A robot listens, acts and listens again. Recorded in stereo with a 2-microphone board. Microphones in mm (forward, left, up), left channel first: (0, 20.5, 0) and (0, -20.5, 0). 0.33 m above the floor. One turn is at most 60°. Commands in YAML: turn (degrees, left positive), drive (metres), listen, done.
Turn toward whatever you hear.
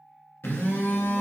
turn: 60
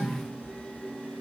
turn: 20
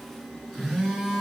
done: "Facing the phone buzzing, 1 to 2 m away."